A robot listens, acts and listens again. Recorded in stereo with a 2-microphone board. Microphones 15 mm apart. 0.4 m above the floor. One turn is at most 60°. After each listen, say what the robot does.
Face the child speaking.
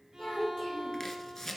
Turn 60° left.
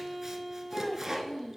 Turn 60° left.
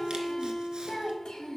Turn 60° left.
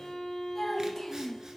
Turn 25° left.
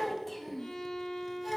Found it: a child speaking, straight ahead.